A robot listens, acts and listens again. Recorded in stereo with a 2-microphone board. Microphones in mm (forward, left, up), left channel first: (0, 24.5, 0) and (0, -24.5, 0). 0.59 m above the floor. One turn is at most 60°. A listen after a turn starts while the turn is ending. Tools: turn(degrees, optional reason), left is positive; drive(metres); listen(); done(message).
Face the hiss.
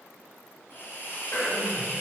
turn(degrees=50, reason="The hiss: about 50° left or 130° left.")
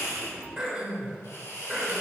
turn(degrees=60, reason="So it is at 75° left.")
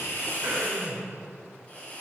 turn(degrees=25, reason="The hiss is now 25° left.")
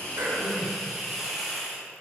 done("Found it: a hiss, straight ahead.")